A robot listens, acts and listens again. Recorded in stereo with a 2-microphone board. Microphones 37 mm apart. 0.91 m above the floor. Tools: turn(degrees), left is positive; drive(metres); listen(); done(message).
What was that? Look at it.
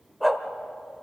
turn(degrees=-30)
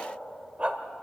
turn(degrees=-145)
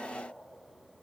listen()
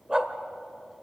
turn(degrees=-20)
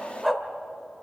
done("Facing the dog barking.")